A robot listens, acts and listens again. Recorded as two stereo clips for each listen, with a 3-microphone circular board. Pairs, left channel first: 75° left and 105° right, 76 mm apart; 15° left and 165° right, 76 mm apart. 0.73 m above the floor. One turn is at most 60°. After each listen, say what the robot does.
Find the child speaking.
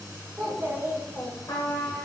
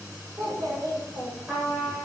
Turn 60° right.
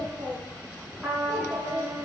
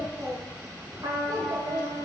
Turn 60° right.
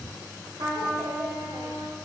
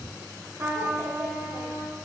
Turn 60° right.
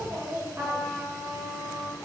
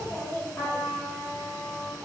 Turn 55° right.
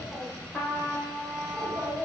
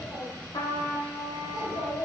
Found it: a child speaking, straight ahead.